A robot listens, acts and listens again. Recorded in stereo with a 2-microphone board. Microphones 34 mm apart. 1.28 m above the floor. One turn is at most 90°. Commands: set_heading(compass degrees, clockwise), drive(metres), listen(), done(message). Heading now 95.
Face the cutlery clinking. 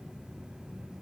listen()
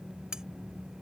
set_heading(115)
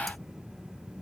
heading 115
listen()
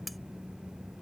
done("Facing the cutlery clinking.")